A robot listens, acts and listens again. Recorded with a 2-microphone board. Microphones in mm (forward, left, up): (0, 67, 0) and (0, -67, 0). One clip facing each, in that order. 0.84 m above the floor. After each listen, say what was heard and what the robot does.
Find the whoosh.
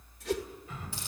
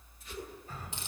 Turn 90° left.
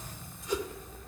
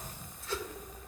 So it is at 15° left. Turn 15° left.
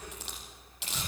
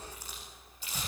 Keep listening.
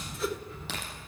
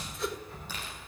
Facing the whoosh.